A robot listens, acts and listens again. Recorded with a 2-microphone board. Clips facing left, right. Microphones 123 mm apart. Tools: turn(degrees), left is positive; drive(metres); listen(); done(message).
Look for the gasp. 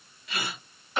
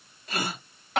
turn(degrees=-40)
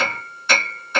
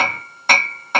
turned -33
listen()
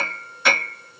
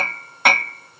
done("I heard a gasp, but can't make it out now. It was about 10° right or 105° right.")